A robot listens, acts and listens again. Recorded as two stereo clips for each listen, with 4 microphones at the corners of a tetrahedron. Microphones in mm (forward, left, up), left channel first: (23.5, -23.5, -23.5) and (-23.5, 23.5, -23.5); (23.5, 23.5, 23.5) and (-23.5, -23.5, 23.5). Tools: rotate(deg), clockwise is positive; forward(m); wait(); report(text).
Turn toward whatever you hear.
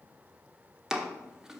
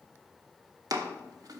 rotate(145)
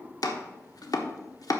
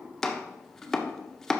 rotate(40)
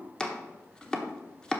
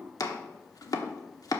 rotate(-30)
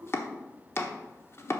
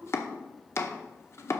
report("Facing the chopping, 1 to 2 m away.")